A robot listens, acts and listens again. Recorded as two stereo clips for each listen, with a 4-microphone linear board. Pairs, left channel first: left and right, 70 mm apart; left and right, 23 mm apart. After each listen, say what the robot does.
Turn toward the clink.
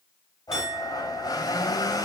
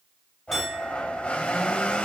Turn 30° right.
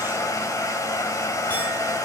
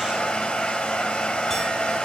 Keep listening.
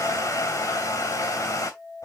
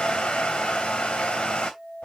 Turn 20° left.
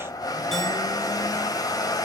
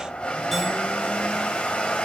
Keep listening.
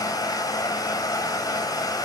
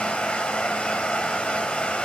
Keep listening.
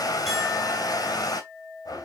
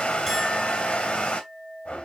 Facing the clink, over 4 m away.